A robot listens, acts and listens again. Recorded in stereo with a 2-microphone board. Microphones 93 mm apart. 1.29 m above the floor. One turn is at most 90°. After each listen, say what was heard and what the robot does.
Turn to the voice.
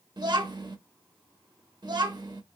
The child speaking: about 50° right or 130° right. Turn 50° right.
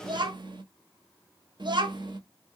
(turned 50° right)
So it is at 70° right. Turn 70° right.
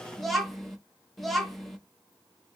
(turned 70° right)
Found it: a child speaking, straight ahead, 1 to 2 m away.